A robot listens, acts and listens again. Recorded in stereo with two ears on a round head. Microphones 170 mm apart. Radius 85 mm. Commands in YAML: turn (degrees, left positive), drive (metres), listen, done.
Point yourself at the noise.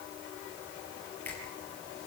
turn: 30
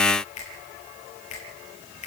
turn: 140
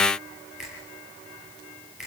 done: "Found it: a finger snap, straight ahead, over 4 m away."